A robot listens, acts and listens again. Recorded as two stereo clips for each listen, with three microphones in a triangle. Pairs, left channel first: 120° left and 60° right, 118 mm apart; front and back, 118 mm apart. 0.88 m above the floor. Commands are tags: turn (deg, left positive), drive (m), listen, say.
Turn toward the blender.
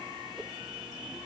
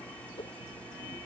<listen/>
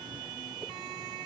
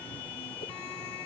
<listen/>
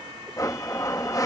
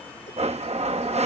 <turn deg="180"/>
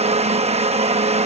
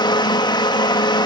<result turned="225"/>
<turn deg="-50"/>
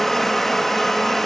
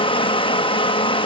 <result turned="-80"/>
<turn deg="35"/>
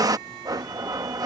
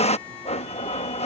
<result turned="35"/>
<say>Facing the blender.</say>